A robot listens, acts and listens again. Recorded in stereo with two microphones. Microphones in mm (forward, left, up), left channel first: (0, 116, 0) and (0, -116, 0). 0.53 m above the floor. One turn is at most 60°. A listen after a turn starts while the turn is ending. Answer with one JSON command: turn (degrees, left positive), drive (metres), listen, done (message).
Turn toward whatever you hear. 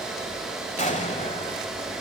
{"turn": 30}
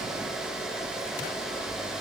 {"listen": true}
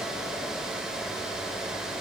{"done": "I heard an explosion, but can't make it out now. It was about straight ahead or 120° left."}